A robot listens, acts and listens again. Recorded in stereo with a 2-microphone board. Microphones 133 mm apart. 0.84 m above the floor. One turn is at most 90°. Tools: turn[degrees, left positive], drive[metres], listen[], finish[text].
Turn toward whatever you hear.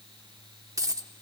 Thought: The dropped coin: about 25° right or 155° right.
Action: turn[-25]
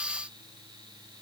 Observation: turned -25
Action: listen[]
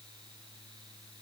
Action: finish[I heard a dropped coin, but can't make it out now. It was about straight ahead or 130° right.]